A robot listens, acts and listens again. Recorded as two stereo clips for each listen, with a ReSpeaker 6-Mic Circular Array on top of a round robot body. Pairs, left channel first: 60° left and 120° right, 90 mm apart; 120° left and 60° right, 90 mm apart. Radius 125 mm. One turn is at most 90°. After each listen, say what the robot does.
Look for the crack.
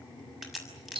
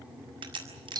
Turn 30° right.
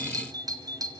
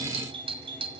I heard a crack from this way, but can't make it out now.